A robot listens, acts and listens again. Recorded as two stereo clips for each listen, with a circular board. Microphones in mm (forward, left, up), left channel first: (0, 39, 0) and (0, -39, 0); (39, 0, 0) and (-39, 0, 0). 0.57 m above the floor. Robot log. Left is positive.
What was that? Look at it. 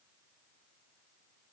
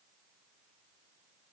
cmd idle
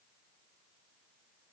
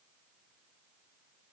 cmd idle
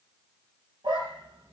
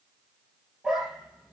note: The dog barking: 95° right.
cmd yaw -95
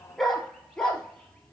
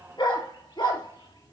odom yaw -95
note: The dog barking is now 10° left.
cmd yaw +10
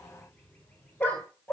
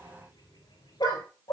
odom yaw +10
note: The dog barking is now 15° left.
cmd yaw +15
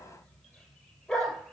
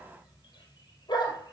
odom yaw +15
end: Found it: a dog barking, straight ahead.